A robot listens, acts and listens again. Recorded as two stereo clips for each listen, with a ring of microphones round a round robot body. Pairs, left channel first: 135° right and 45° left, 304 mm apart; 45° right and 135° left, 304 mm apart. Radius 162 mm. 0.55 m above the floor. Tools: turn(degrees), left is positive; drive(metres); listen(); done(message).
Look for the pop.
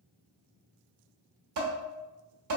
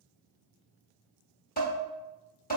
listen()
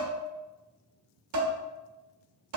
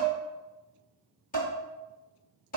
listen()
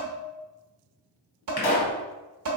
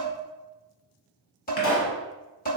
turn(degrees=-95)
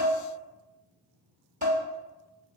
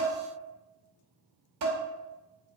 done("Facing where the pop came from. I can't hear it now.")